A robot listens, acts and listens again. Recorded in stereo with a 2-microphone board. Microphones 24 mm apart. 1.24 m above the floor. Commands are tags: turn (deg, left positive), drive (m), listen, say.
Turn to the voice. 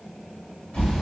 <listen/>
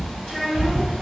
<turn deg="-30"/>
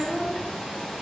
<turn deg="15"/>
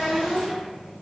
<say>Found it: a child speaking, straight ahead, 1 to 2 m away.</say>